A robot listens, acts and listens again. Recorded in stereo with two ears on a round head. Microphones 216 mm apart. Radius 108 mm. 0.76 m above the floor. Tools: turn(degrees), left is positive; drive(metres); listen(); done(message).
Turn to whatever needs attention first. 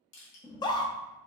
turn(degrees=20)
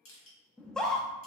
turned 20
done("Facing the scream.")